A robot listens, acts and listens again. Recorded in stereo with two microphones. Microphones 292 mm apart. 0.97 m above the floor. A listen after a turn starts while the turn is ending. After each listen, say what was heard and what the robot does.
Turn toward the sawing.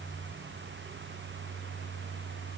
Keep listening.
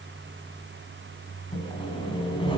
The sawing: about 15° left or 165° left. Turn 15° left.
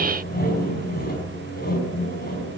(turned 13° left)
So it is at 145° left. Turn 145° left.
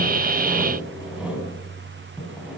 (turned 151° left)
Facing the sawing.